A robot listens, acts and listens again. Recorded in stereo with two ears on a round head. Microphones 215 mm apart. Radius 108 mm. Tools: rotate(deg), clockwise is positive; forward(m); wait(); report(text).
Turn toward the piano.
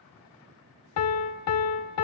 rotate(-65)
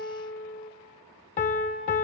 rotate(-30)
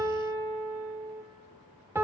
rotate(10)
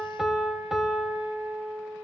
report("Facing the piano.")